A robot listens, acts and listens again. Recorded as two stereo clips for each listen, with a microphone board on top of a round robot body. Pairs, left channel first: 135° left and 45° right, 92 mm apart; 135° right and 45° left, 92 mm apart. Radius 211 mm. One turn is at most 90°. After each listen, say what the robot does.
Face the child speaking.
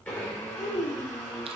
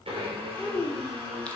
Turn 90° left.
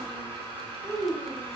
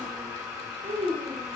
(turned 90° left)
Turn 40° left.
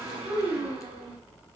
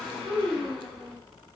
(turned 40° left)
Facing the child speaking, 2 to 4 m away.